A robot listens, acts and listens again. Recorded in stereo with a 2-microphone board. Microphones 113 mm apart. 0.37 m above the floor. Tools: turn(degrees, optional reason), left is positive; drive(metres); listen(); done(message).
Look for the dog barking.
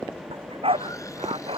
turn(degrees=-60, reason="The dog barking: about 60° right or 120° right.")
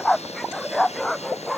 done("Facing the dog barking.")